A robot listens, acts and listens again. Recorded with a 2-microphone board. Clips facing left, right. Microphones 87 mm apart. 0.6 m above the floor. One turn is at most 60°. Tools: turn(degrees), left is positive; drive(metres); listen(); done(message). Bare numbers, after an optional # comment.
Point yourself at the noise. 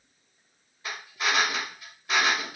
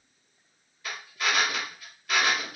# The drill: about 25° left or 155° left.
turn(25)
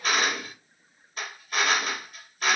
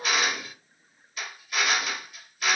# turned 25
# So it is at 130° left.
turn(60)
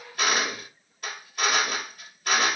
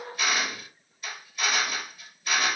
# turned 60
# The drill is now 80° left.
turn(60)
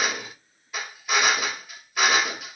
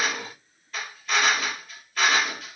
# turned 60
# The drill is now 10° left.
turn(10)
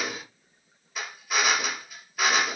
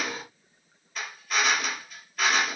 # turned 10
done("Found it: a drill, straight ahead.")